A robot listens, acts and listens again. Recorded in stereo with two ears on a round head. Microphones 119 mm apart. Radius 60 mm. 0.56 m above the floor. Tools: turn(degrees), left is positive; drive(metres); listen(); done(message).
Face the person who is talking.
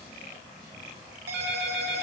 listen()
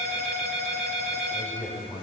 turn(degrees=25)
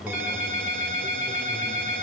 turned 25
done("Found it: a man speaking, straight ahead, 2 to 4 m away.")